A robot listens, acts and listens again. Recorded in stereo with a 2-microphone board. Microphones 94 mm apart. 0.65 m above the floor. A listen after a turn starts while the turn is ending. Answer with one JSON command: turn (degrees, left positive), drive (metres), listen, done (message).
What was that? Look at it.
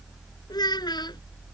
{"turn": 55}
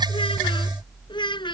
{"turn": 65}
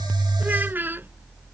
{"turn": -25}
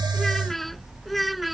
{"done": "Found it: a child speaking, straight ahead."}